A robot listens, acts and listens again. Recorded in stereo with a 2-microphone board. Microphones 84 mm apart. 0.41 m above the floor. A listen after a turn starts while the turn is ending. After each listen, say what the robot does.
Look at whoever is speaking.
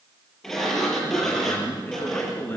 Turn 25° left.
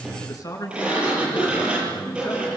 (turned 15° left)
Turn 140° left.
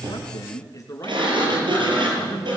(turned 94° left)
Turn 40° left.
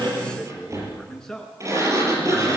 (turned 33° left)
Facing the man speaking.